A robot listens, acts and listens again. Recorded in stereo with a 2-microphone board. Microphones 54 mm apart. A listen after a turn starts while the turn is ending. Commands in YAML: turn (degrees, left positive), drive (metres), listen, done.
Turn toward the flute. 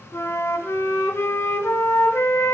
turn: 65
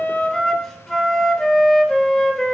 done: "Facing the flute."